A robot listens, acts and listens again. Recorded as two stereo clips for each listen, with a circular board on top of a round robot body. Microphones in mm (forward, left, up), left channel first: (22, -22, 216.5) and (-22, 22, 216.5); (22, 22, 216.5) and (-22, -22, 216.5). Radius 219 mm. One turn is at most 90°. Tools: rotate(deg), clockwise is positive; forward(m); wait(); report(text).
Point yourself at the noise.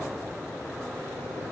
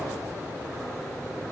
wait()
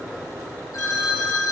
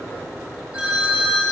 rotate(65)
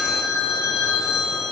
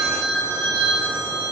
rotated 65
rotate(20)
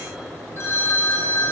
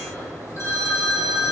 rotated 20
report("Found it: a phone ringing, straight ahead.")